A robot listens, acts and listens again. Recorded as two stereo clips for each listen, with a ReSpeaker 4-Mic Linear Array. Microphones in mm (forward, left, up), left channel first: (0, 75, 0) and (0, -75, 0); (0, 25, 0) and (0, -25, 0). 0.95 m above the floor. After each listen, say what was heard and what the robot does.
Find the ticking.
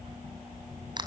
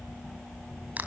Keep listening.
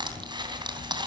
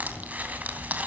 Keep listening.
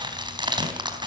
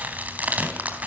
I can't make out ticking, only crushing.